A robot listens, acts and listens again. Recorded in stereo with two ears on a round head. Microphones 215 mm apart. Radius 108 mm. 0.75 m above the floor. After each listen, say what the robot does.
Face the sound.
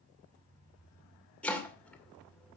Turn 30° left.
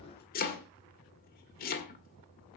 Turn 145° left.
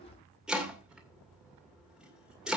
Found it: chopping, straight ahead.